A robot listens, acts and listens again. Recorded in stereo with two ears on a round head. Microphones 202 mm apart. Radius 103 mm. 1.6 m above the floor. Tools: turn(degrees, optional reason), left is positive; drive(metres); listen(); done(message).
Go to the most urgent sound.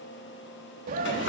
turn(degrees=-40, reason="The scream: about 40° right or 140° right.")
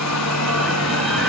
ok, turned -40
listen()
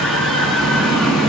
drive(metres=1.0)
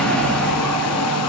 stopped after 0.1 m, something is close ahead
done("Blocked. The scream is further on, straight ahead.")